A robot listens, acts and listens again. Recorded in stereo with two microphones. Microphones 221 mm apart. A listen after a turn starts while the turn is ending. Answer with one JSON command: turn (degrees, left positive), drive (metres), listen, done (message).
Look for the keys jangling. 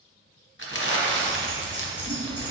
{"turn": -50}
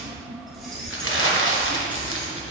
{"done": "Facing the keys jangling, 2 to 4 m away."}